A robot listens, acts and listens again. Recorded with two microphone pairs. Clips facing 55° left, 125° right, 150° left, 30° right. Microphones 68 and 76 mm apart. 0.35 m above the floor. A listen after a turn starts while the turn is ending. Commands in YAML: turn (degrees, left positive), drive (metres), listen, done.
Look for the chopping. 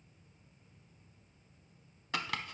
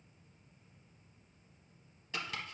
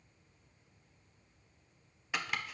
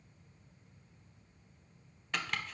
turn: 70
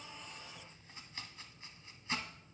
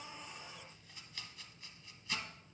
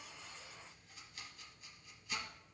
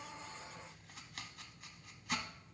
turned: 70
done: "Found it: chopping, straight ahead, under 1 m away."